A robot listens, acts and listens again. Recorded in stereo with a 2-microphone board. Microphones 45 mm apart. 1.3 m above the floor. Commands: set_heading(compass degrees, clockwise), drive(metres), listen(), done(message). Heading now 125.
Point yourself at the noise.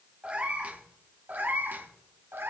set_heading(185)
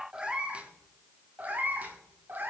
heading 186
set_heading(236)
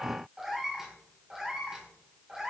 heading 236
set_heading(251)
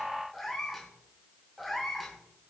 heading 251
done("Found it: a cat meowing, straight ahead, 2 to 4 m away.")